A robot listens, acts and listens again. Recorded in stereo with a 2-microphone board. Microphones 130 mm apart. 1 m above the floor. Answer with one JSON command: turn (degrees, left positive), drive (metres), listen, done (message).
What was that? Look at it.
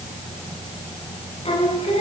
{"turn": 45}
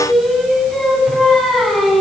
{"done": "Facing the singing."}